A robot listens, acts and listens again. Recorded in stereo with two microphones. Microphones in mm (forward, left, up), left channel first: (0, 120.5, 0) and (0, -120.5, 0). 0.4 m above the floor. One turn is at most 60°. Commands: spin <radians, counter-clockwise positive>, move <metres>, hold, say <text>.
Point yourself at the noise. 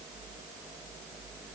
hold
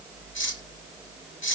spin 0.96
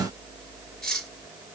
say Facing the cutlery clinking.